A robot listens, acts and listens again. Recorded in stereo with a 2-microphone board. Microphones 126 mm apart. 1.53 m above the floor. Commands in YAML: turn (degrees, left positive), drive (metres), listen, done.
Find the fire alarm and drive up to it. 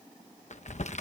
listen: true
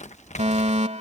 turn: -60
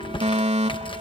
turn: -60
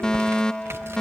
drive: 1.0
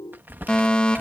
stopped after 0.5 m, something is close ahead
turn: 10
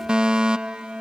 done: "Something is in my way. I am facing the fire alarm but have not reached it."